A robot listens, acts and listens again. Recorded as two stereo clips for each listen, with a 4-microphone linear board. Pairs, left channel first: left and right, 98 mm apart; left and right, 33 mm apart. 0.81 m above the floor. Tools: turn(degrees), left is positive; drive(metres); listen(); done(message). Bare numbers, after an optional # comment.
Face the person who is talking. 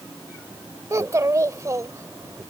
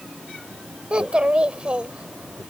# The child speaking: about 35° right or 145° right.
turn(-35)
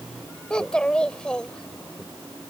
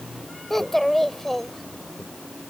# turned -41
# So it is at 10° left.
turn(10)
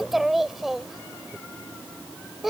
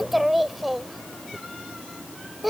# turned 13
done("Facing the child speaking.")